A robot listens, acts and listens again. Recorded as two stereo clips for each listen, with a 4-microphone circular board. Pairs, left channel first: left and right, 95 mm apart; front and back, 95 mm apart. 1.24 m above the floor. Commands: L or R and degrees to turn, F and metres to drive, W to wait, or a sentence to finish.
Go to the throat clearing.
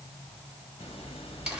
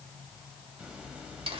W
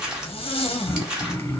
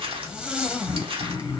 L35
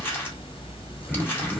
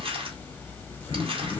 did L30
F1.0
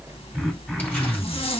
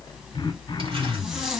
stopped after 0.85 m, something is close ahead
Arrived at the throat clearing, straight ahead.